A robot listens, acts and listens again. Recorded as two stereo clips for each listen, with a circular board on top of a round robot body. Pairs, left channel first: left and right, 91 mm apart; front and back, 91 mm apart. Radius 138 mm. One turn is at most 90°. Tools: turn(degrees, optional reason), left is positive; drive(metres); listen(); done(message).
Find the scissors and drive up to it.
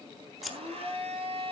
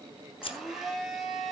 drive(metres=1.0)
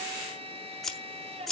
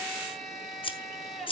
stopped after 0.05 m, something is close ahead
done("Blocked. The scissors is further on, straight ahead.")